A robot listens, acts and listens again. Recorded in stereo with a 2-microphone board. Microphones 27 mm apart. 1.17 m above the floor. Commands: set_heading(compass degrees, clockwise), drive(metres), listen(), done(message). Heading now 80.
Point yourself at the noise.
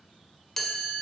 set_heading(50)
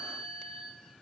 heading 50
set_heading(280)
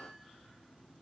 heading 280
listen()
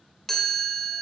set_heading(270)
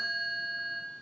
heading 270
done("Facing the chime.")